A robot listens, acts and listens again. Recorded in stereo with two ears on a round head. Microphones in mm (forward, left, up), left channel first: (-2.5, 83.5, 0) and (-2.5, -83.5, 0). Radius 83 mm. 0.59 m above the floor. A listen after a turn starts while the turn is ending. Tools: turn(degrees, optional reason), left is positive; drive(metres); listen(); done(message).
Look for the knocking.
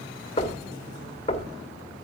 turn(degrees=35, reason="The knocking: about 35° left or 145° left.")
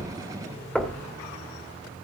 done("Found it: knocking, straight ahead.")